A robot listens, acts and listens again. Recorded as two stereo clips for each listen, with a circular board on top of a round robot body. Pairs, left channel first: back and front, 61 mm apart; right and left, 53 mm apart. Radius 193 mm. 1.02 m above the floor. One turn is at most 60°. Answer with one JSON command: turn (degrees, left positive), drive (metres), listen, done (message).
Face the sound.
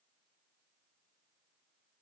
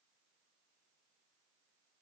{"listen": true}
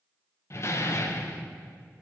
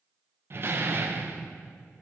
{"turn": 60}
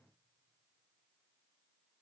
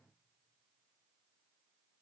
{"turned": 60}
{"turn": 60}
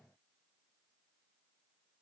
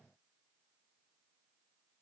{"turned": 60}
{"turn": 15}
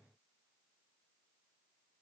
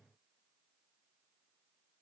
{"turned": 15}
{"done": "Facing where the door slam came from. I can't hear it now."}